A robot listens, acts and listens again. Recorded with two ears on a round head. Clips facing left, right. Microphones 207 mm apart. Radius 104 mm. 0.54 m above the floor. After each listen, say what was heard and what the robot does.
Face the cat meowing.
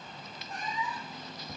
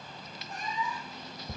Turn 30° left.
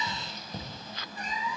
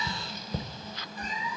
So it is at 120° left. Turn 120° left.
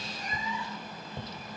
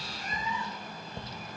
Keep listening.
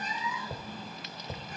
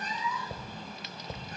The cat meowing is now 20° left. Turn 20° left.
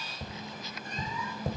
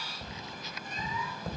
Keep listening.
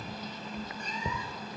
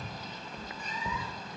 Keep listening.
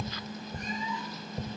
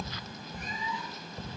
I heard a cat meowing from this way, but can't make it out now.